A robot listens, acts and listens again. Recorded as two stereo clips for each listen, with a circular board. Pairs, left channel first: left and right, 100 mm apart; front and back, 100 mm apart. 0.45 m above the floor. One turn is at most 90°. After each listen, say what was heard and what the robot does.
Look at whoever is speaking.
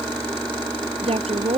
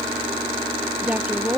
The woman speaking: 105° right. Turn 90° right.
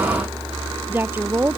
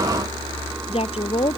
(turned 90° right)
The woman speaking is now 20° right. Turn 20° right.
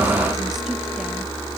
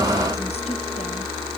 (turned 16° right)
Keep listening.
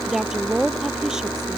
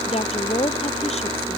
Found it: a woman speaking, straight ahead.